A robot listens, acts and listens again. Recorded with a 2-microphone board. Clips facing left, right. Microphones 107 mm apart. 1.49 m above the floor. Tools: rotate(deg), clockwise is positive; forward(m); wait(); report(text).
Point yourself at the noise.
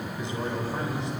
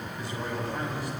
rotate(-25)
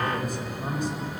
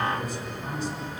rotate(-130)
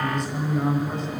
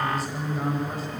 report("Found it: a man speaking, straight ahead, over 4 m away.")